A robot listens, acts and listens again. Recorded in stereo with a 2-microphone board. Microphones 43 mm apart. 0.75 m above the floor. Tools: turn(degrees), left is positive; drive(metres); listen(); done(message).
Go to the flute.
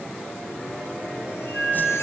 turn(degrees=-30)
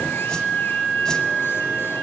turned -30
turn(degrees=20)
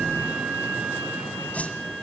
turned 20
drive(metres=1.0)
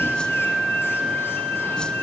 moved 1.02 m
drive(metres=1.0)
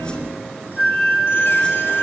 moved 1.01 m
drive(metres=1.0)
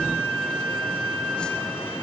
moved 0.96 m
drive(metres=1.0)
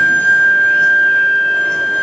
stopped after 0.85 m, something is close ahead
done("I am next to the flute.")